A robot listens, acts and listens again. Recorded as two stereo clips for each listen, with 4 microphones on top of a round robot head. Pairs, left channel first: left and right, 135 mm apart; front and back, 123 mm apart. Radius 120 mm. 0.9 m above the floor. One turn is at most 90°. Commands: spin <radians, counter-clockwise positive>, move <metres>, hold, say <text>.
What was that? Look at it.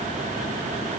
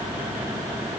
hold
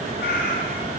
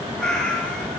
spin 1.40
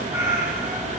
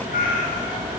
spin -0.26
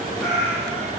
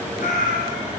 say Facing the cat meowing, 2 to 4 m away.